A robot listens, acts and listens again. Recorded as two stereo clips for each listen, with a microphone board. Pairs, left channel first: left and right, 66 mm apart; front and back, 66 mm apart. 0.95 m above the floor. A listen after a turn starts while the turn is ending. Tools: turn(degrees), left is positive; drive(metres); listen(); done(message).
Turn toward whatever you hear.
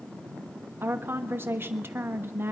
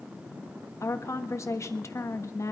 turn(degrees=-35)
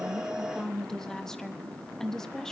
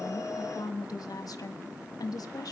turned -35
done("Facing the woman speaking.")